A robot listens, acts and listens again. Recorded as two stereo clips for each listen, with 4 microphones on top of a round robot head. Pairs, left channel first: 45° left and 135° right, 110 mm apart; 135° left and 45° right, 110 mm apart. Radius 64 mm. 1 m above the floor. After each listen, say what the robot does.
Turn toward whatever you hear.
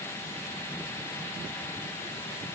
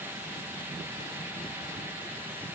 Keep listening.
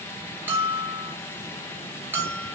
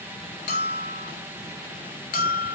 Turn 150° left.
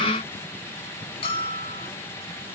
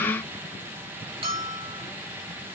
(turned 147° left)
Found it: a bell, straight ahead, 2 to 4 m away.